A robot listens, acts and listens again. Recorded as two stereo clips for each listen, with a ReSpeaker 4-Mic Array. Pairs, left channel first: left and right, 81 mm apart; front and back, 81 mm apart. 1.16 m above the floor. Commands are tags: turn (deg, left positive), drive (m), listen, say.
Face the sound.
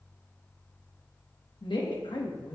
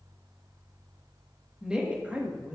<turn deg="110"/>
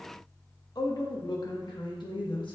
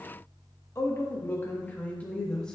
<turn deg="80"/>
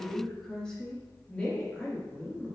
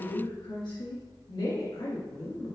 <turn deg="15"/>
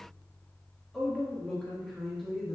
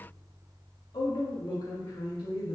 <say>Facing the woman speaking, 1 to 2 m away.</say>